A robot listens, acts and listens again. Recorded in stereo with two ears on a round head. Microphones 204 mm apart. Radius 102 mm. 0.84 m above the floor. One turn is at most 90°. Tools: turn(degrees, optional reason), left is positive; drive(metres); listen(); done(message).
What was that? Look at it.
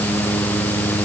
listen()
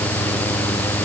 listen()
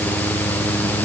done("I can't make out anything.")